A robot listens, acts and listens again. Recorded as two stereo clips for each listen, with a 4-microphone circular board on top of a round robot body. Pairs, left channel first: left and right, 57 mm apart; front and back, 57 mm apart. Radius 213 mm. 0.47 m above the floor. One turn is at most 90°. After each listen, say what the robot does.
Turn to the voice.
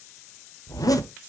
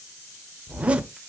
Keep listening.
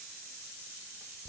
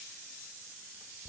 Keep listening.
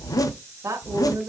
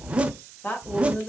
Turn 55° right.
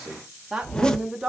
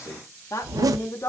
Turn 10° right.
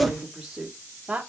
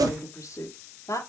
Turn 10° right.
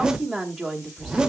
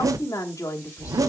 Found it: a woman speaking, straight ahead, 1 to 2 m away.